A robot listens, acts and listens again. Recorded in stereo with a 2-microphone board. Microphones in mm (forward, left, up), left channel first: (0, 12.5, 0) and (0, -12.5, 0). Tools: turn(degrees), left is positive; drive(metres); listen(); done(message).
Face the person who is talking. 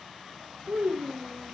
turn(degrees=-75)
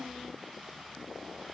turn(degrees=-30)
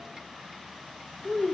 turn(degrees=15)
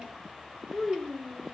done("Found it: a child speaking, straight ahead.")